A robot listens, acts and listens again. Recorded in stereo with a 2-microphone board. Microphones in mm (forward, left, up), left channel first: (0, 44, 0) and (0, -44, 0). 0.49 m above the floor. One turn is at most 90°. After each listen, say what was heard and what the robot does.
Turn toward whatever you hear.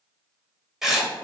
Turn 30° right.
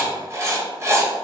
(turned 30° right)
So it is at 145° right. Turn 90° right.
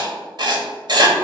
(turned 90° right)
The writing is now 60° right. Turn 60° right.
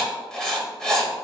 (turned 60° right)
Found it: writing, straight ahead.